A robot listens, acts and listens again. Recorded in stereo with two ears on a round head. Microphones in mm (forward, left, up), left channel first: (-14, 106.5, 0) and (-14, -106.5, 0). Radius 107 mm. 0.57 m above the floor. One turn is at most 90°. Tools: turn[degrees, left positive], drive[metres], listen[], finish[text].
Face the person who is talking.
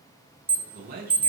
Thought: The man speaking: about 40° right or 140° right.
Action: turn[-40]
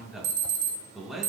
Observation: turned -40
Action: finish[Found it: a man speaking, straight ahead, over 4 m away.]